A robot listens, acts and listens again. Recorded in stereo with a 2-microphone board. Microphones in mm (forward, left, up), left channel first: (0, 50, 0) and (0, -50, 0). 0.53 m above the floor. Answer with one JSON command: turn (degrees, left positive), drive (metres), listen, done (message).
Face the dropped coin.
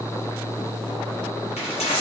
{"turn": 90}
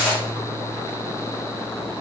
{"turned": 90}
{"done": "Found it: a dropped coin, straight ahead."}